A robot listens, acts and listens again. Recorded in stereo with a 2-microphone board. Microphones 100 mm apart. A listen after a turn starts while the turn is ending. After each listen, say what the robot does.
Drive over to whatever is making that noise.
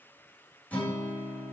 Turn 15° left.
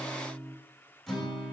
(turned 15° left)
Drive 1.0 m forward.
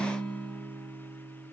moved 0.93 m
Drive 1.0 m forward.
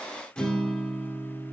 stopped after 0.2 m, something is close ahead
Turn 10° left.
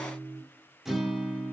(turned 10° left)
Arrived at the guitar, straight ahead.